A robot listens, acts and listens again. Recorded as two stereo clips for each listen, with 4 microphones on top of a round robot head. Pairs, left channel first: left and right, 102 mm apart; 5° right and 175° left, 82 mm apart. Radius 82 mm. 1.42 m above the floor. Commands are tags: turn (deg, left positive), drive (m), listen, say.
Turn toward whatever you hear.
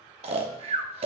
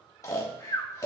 <turn deg="-60"/>
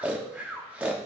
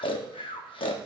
<turn deg="-10"/>
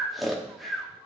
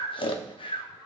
<say>Found it: snoring, straight ahead, under 1 m away.</say>